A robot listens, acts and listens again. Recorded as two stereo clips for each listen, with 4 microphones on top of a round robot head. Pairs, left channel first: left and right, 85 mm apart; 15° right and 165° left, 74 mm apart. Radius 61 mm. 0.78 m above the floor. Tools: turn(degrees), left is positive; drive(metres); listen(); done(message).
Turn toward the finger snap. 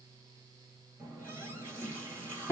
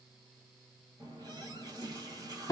listen()
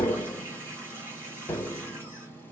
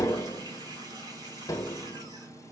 listen()
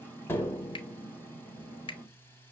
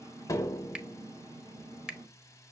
turn(degrees=85)
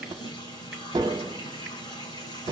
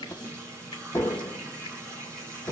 listen()
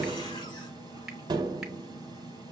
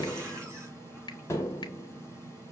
listen()
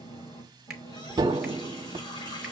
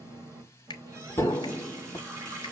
done("Found it: a finger snap, straight ahead, 1 to 2 m away.")